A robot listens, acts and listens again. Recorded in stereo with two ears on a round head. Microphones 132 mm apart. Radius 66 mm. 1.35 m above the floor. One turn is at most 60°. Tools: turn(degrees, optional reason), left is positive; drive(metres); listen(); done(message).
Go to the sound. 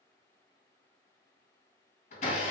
turn(degrees=55, reason="The blender: about 55° left or 125° left.")
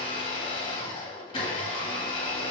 turn(degrees=45, reason="So it is at 45° left.")
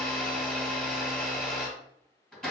drive(metres=1.0)
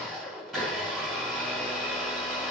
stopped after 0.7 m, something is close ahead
done("I am next to the blender.")